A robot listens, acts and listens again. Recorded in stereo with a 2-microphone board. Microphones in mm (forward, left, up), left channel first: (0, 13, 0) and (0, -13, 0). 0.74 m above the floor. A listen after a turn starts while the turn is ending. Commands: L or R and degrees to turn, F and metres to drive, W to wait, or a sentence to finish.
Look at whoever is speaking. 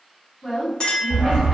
L30
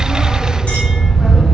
W
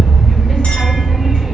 W
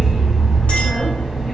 I heard a woman speaking, but can't make it out now. It was about 20° right or 140° left.